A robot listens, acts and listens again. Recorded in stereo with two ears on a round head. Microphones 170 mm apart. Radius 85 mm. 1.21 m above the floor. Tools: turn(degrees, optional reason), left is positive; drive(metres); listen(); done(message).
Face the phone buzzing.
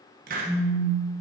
turn(degrees=30, reason="The phone buzzing: about 30° left or 150° left.")
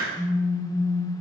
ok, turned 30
done("Found it: a phone buzzing, straight ahead, 1 to 2 m away.")